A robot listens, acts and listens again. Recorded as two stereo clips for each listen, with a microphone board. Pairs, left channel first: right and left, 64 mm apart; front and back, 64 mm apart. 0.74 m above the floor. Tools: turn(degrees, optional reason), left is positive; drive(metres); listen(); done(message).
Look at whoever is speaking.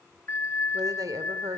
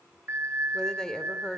turn(degrees=80, reason="The woman speaking: 80° left.")
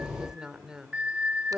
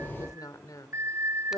turn(degrees=10, reason="The woman speaking is now 10° left.")
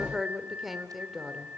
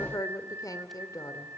done("Found it: a woman speaking, straight ahead.")